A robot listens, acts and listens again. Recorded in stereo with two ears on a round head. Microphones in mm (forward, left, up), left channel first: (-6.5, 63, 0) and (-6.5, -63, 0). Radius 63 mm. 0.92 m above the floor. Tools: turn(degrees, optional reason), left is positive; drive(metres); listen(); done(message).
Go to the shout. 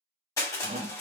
turn(degrees=-50, reason="The shout: about 50° right or 130° right.")
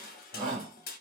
turn(degrees=-75, reason="So it is at 75° right.")
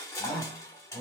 turn(degrees=10, reason="The shout is now 10° left.")
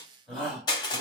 drive(metres=1.0)
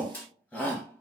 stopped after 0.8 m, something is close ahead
turn(degrees=10, reason="The shout is now 10° left.")
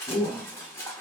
done("Arrived at the shout, straight ahead.")